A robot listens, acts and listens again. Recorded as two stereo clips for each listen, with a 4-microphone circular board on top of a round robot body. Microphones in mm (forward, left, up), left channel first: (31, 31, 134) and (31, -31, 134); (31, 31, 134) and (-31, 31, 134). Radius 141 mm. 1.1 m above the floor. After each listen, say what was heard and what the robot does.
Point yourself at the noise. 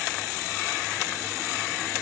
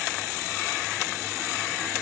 Keep listening.
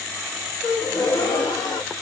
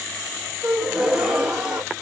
The gasp: 105° left. Turn 105° left.
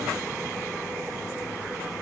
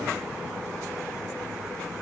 I heard a gasp from this way, but can't make it out now.